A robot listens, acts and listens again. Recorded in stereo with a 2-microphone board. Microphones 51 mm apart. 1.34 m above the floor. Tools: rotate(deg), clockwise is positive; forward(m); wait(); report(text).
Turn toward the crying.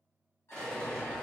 wait()
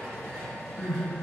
rotate(-60)
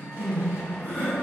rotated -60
rotate(-60)
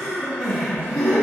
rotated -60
report("Found it: crying, straight ahead.")